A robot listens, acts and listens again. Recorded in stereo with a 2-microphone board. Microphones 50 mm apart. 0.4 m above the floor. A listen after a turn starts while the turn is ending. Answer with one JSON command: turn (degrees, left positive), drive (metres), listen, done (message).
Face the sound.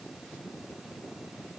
{"listen": true}
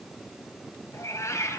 {"turn": 90}
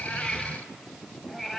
{"done": "Found it: a cat meowing, straight ahead."}